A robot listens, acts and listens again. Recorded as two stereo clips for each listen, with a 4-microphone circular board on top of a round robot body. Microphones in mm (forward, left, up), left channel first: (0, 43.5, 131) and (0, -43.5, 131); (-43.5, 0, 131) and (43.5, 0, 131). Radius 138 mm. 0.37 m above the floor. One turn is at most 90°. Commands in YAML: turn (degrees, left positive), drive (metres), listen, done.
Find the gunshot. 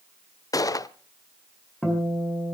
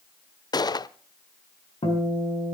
turn: 90
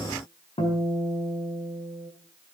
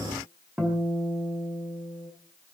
turn: 50
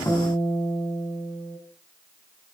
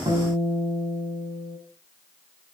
done: "I heard a gunshot from this way, but can't make it out now."